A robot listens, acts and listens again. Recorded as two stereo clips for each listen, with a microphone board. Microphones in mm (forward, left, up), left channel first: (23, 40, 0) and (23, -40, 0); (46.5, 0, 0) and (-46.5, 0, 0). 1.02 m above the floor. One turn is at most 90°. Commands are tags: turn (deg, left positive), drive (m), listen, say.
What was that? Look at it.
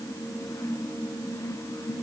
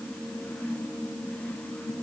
<listen/>
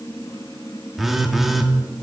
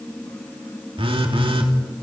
<turn deg="-90"/>
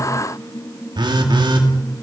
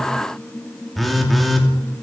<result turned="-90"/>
<turn deg="-90"/>
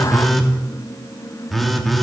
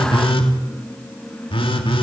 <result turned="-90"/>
<say>Found it: a phone buzzing, straight ahead, 2 to 4 m away.</say>